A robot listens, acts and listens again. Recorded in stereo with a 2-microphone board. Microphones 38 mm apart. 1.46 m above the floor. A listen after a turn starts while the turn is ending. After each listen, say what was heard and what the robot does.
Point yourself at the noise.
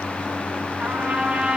The trumpet: about 15° right or 165° right. Turn 15° right.
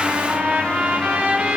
So it is at 150° right. Turn 150° right.
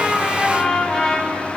Found it: a trumpet, straight ahead, over 4 m away.